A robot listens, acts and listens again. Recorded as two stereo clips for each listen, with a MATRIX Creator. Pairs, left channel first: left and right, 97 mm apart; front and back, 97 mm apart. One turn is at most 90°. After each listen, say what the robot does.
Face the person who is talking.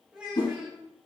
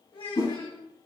Turn 10° right.
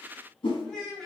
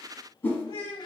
Facing the child speaking.